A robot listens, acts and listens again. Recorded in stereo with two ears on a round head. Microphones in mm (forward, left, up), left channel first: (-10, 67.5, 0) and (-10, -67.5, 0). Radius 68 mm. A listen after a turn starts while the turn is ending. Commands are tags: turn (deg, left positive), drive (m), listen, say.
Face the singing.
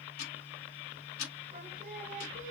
<turn deg="-55"/>
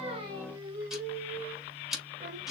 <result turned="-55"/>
<turn deg="-50"/>
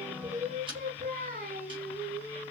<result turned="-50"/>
<turn deg="-60"/>
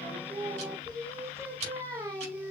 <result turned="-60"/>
<turn deg="-20"/>
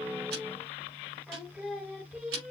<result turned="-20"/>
<say>Found it: singing, straight ahead.</say>